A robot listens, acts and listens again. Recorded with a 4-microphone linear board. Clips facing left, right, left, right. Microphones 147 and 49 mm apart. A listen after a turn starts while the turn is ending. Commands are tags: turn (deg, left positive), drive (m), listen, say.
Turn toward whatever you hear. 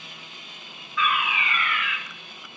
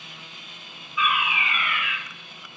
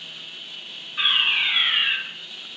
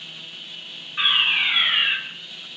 <turn deg="-30"/>
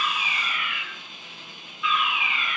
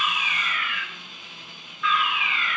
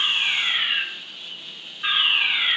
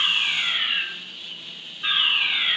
<turn deg="15"/>
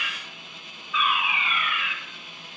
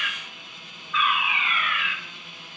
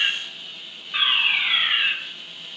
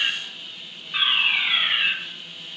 <say>Found it: a fire alarm, straight ahead, 2 to 4 m away.</say>